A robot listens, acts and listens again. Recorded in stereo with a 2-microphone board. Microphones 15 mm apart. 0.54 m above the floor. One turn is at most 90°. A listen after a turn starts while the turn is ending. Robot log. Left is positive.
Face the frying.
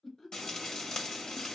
note: The frying: about 65° left or 115° left.
cmd yaw +65
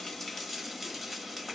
end: Facing the frying.